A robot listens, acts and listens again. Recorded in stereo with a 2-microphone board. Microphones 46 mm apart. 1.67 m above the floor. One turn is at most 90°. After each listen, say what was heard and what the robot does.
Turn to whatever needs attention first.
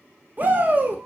The shout: about 40° right or 140° right. Turn 40° right.
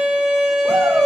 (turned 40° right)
Keep listening.
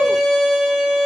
Keep listening.
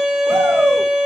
I heard a shout, but can't make it out now. It was about straight ahead or 100° right.